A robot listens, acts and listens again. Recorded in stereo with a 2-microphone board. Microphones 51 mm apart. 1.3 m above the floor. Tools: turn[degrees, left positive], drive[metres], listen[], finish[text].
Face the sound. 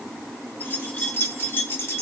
Thought: The keys jangling: about 50° left or 130° left.
Action: turn[50]
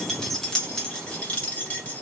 Thought: So it is at 30° left.
Action: turn[30]
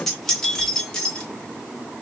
Thought: The keys jangling is now 20° left.
Action: turn[20]
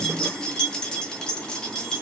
Thought: The keys jangling is now 15° left.
Action: turn[15]
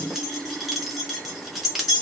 Action: finish[Facing the keys jangling.]